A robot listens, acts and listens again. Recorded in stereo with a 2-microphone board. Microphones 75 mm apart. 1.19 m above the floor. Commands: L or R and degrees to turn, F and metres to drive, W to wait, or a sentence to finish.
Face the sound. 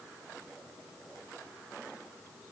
W
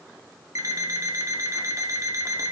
R45
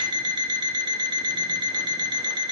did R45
R85
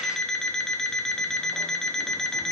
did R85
Facing the alarm clock, under 1 m away.